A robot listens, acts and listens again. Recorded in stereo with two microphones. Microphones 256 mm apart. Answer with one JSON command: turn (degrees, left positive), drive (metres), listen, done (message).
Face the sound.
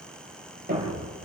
{"turn": -30}
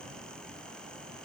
{"listen": true}
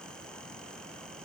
{"done": "I heard a thud, but can't make it out now. It was about straight ahead or 120° right."}